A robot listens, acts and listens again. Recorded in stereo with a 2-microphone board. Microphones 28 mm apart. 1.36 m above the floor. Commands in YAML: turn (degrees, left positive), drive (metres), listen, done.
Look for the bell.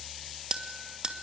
turn: -30
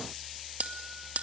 turn: -115
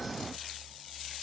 listen: true
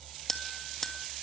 turn: 15
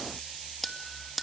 done: "Found it: a bell, straight ahead, 2 to 4 m away."